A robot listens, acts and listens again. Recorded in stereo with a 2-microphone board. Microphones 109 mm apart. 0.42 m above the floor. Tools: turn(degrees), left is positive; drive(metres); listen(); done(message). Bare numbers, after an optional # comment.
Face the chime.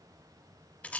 listen()
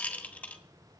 listen()
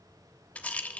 done("I can't make out a chime, only a rattle.")